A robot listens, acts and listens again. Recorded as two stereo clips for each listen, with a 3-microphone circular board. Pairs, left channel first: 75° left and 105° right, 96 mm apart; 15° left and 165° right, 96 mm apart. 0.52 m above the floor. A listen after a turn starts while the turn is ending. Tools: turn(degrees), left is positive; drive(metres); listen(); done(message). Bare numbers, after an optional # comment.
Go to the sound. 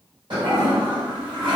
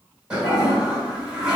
# The toilet flushing: 90° right.
turn(-90)
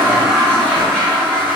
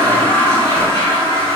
drive(1.0)
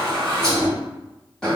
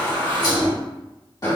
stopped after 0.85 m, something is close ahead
done("Arrived at the toilet flushing, straight ahead.")